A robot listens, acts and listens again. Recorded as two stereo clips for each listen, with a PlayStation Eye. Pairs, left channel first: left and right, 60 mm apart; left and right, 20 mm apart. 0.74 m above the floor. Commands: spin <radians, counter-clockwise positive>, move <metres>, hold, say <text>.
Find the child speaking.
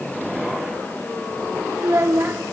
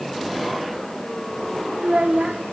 spin -0.61
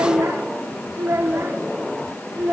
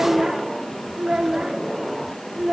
spin -0.44
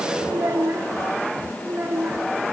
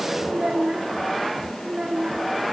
spin -0.61
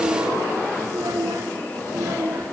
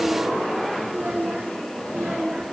spin -2.01
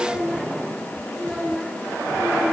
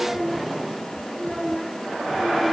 say Facing the child speaking.